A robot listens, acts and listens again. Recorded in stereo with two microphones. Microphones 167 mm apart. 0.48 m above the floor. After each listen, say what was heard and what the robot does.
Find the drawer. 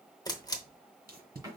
The drawer: about 25° right or 155° right. Turn 25° right.
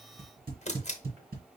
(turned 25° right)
Keep listening.
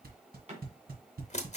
So it is at 135° right. Turn 135° right.
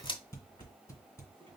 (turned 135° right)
Keep listening.
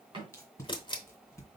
The drawer is now 35° right. Turn 35° right.
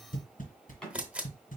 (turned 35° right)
Facing the drawer, 1 to 2 m away.